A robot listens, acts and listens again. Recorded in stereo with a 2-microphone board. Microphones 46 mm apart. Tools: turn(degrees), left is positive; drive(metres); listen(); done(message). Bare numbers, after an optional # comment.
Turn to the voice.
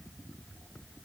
listen()
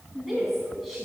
turn(30)
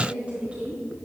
# So it is at 30° right.
turn(-30)
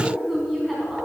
done("Found it: a woman speaking, straight ahead.")